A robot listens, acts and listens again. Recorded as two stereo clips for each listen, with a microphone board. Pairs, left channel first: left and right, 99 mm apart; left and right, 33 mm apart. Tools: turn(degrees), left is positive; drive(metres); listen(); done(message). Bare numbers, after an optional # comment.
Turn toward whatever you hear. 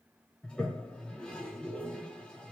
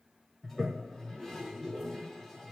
turn(30)
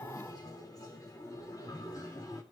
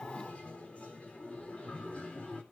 # So it is at 140° left.
turn(140)
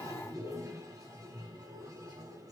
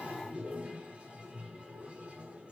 # The toilet flushing is now 40° right.
turn(-40)
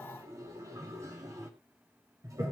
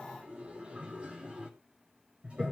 # The toilet flushing is now 35° right.
turn(-35)
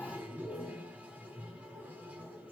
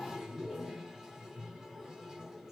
# The toilet flushing is now 15° right.
turn(-15)
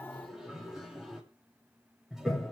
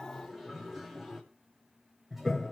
done("Facing the toilet flushing.")